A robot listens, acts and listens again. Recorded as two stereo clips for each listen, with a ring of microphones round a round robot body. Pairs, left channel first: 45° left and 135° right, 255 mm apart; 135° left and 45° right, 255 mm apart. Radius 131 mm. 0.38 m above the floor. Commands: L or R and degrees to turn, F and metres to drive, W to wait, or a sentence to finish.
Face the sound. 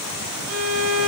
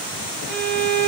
R170
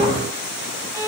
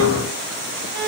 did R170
R55
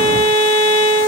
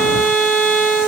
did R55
R15
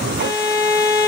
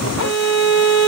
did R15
Facing the violin, 1 to 2 m away.